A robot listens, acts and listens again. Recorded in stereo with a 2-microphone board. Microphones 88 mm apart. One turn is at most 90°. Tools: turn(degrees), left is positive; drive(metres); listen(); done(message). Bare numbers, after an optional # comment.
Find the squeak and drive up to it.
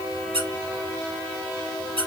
turn(-90)
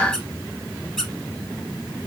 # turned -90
drive(1.0)
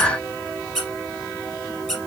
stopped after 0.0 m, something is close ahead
done("Blocked. The squeak is further on, straight ahead.")